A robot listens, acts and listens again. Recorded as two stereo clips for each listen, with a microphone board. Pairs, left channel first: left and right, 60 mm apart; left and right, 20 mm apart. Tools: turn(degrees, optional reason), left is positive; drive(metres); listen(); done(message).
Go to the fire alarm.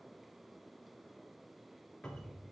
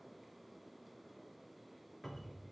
listen()
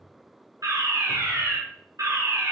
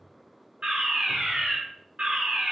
turn(degrees=-90)
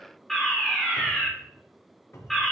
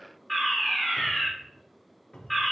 drive(metres=1.0)
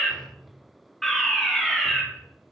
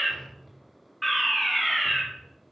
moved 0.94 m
drive(metres=1.0)
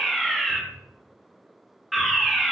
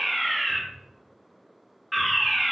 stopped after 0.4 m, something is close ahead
done("Arrived at the fire alarm, straight ahead.")